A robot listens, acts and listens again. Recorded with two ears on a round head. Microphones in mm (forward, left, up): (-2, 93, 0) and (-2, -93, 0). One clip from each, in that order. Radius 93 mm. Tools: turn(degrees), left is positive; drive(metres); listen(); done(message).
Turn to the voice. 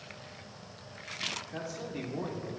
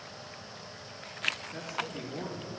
turn(degrees=30)
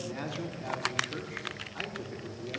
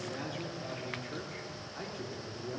turn(degrees=30)
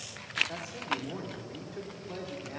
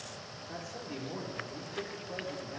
turn(degrees=30)
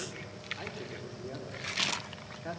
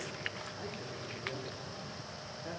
turn(degrees=135)
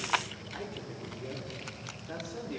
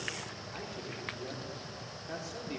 turn(degrees=-20)
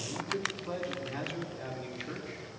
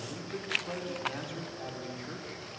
turn(degrees=-10)
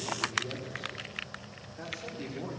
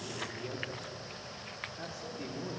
done("Facing the man speaking.")